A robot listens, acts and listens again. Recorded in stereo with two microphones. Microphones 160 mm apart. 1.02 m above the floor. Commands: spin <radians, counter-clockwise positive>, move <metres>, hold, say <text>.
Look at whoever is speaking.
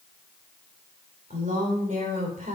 spin -0.96
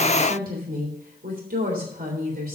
spin -1.22
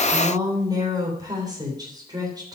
spin -0.44
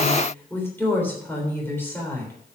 spin 0.26
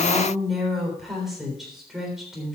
say Facing the woman speaking.